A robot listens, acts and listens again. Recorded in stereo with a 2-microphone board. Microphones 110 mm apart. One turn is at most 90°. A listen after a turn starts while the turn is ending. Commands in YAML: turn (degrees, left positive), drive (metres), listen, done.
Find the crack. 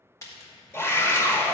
turn: 30
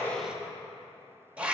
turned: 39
listen: true
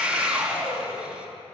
done: "I heard a crack, but can't make it out now. It was about 10° right or 115° left."